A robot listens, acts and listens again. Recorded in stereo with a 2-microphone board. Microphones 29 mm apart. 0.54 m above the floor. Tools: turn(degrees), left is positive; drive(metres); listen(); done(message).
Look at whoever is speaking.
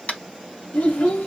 turn(degrees=60)
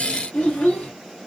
turn(degrees=55)
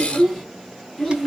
done("Facing the child speaking.")